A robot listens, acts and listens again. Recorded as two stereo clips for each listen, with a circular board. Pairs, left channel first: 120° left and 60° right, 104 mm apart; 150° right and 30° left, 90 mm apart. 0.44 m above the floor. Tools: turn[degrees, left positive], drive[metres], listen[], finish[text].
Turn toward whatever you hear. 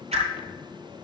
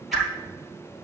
Thought: The whoosh: 60° right.
Action: turn[-60]
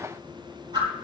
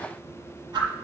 Thought: The whoosh is now 10° right.
Action: turn[-10]
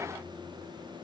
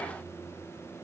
Action: listen[]
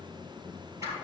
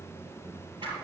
Action: listen[]
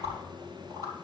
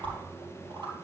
Action: finish[Found it: a whoosh, straight ahead.]